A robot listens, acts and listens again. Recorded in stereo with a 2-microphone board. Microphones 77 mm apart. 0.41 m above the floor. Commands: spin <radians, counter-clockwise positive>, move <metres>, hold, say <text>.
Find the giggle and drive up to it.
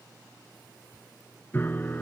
hold
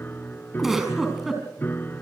spin -0.52
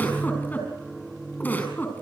spin 0.44
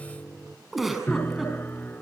move 1.0
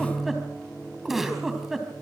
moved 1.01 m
move 1.0
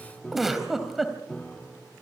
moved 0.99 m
move 1.0
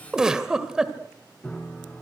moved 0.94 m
spin -0.17
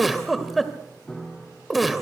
move 1.0
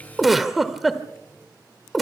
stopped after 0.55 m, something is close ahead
say Arrived at the giggle, straight ahead.